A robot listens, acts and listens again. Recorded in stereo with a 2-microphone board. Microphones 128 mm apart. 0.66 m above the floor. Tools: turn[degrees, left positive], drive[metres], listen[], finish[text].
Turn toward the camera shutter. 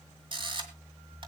Thought: The camera shutter: about 40° right or 140° right.
Action: turn[-40]
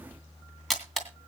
Action: finish[Facing the camera shutter.]